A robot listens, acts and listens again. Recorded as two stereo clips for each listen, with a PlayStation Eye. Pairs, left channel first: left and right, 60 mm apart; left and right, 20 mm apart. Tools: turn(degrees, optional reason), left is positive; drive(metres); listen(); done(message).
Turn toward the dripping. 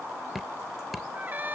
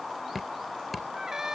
turn(degrees=30)
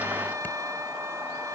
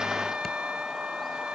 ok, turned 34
listen()
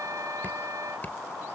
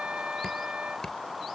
listen()
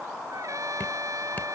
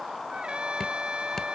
turn(degrees=150, reason="So it is at 150° left.")
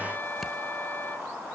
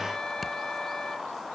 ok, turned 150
listen()
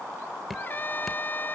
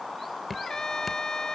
done("Found it: dripping, straight ahead.")